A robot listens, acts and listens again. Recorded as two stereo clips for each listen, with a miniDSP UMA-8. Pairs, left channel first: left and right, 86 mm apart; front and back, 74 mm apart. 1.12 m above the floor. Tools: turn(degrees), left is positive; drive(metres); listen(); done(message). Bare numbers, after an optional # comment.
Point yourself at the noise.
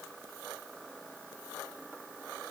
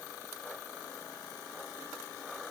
listen()
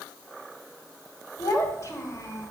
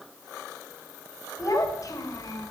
# The child speaking: 40° left.
turn(40)
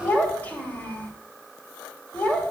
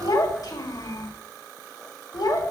# The child speaking is now 20° left.
turn(20)
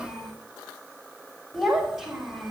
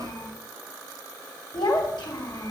done("Facing the child speaking, 2 to 4 m away.")